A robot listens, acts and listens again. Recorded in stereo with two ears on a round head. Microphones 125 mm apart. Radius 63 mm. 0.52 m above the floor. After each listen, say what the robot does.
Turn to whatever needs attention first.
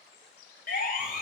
Turn 70° left.
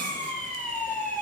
Turn 10° left.
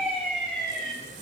Facing the siren.